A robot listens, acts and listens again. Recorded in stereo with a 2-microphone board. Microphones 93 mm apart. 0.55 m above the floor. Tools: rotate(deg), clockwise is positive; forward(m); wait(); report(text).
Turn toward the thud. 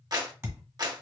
rotate(25)
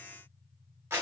wait()
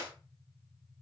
report("I heard a thud, but can't make it out now. It was about straight ahead or 130° right.")